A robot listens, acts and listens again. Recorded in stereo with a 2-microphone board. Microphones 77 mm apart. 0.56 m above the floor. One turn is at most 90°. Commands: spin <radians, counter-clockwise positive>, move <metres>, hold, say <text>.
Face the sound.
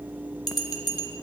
spin 1.05
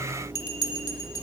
spin 0.96
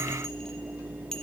say Facing the bell, under 1 m away.